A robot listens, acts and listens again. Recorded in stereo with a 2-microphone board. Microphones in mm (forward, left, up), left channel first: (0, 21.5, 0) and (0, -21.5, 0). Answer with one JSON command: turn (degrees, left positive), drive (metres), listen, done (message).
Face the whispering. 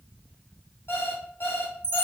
{"listen": true}
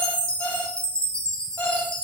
{"listen": true}
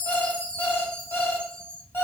{"done": "I can't make out whispering, only a chime and an alarm clock."}